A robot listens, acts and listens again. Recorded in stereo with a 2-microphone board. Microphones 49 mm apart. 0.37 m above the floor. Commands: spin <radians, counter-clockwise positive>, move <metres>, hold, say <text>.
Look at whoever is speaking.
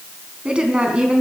spin -0.35
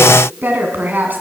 spin -2.36
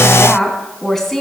spin 0.17
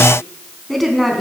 say Found it: a woman speaking, straight ahead, 2 to 4 m away.